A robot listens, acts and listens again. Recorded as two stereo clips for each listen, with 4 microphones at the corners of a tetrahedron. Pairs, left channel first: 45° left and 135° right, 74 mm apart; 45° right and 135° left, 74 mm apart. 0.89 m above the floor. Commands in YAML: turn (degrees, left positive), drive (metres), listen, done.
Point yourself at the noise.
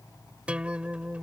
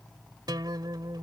turn: 150
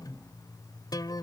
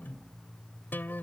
turn: 20
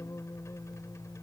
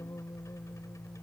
done: "Found it: a guitar, straight ahead."